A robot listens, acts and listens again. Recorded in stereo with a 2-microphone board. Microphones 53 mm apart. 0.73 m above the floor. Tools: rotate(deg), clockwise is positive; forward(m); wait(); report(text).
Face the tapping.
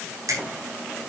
wait()
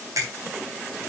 wait()
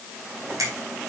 report("I can't make out tapping to turn to.")